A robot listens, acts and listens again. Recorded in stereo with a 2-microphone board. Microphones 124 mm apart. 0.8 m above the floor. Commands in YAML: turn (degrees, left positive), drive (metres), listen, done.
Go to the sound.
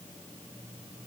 listen: true
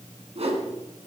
turn: -55
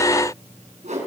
turn: -75
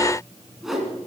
drive: 1.0
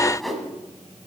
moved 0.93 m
drive: 1.0
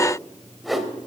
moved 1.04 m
drive: 1.0
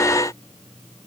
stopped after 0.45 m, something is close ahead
listen: true
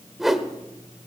done: "Arrived at the whoosh, straight ahead."